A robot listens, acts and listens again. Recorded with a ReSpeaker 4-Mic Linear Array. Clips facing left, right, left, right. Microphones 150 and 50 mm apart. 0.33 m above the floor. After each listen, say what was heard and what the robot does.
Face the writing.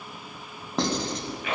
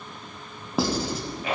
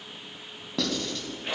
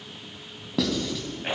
Turn 30° right.
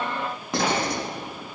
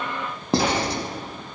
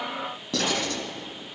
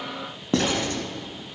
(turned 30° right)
So it is at 145° right. Turn 145° right.
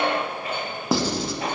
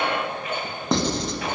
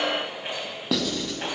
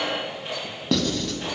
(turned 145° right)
Facing the writing, under 1 m away.